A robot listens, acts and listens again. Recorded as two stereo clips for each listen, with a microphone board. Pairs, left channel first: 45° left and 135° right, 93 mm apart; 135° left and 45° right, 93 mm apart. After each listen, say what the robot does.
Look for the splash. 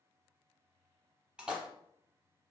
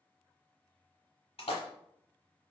Turn 145° left.
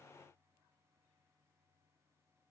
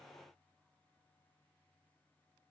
I heard a splash from this way, but can't make it out now.